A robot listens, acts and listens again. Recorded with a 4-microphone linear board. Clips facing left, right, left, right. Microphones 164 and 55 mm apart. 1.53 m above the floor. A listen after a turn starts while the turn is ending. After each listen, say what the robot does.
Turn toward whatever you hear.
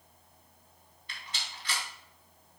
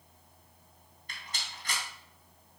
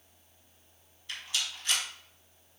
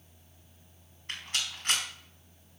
Turn 45° right.
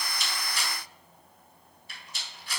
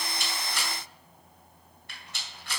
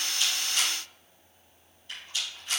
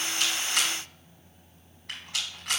Turn 90° right.
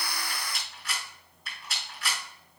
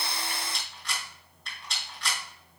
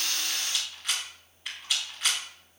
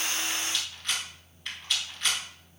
Found it: a rattle, straight ahead, 2 to 4 m away.